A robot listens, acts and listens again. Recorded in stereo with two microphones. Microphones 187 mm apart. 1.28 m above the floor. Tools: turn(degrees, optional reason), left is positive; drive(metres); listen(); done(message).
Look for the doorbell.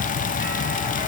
listen()
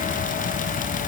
listen()
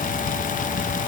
done("I can't make out a doorbell to turn to.")